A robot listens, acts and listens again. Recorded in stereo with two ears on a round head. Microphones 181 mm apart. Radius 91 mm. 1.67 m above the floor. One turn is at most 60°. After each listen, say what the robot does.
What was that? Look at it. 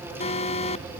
Turn 35° left.
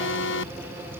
Turn 60° left.
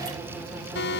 Turn 55° left.
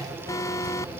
Turn 15° left.
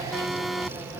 Facing the alarm.